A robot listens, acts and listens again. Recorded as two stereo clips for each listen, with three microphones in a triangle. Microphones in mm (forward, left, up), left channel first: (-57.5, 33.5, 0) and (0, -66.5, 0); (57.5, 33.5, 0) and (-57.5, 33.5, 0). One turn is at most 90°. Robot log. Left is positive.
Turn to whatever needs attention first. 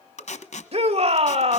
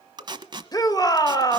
note: The shout: 50° right.
cmd yaw -50
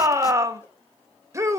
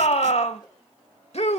end: Facing the shout, 1 to 2 m away.